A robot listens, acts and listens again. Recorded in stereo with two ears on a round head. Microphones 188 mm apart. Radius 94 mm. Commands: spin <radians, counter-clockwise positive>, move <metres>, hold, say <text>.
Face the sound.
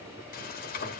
spin 0.70
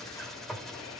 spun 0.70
say Found it: frying, straight ahead.